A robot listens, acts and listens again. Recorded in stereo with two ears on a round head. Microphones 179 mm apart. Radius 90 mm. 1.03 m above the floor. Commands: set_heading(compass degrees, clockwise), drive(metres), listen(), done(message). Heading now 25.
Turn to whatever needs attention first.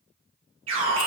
set_heading(95)
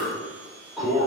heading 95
done("Facing the alarm, 2 to 4 m away.")